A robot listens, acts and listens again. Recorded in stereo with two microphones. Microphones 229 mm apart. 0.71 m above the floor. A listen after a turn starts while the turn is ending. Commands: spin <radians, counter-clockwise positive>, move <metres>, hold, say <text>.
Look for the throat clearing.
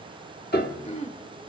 spin 0.52
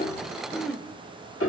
say Facing the throat clearing.